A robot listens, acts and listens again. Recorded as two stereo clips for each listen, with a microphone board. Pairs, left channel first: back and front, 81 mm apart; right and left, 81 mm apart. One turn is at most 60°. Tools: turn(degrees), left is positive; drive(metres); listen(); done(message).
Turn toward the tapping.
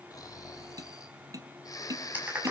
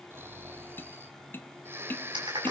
turn(degrees=-30)
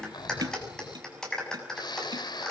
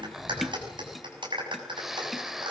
done("Facing the tapping.")